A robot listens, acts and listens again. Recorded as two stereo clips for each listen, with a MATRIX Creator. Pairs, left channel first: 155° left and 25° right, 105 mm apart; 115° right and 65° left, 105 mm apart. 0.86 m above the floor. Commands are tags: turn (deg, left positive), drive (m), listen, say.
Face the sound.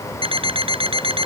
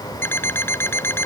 <turn deg="-45"/>
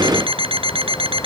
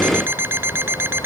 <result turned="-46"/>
<say>Facing the alarm clock.</say>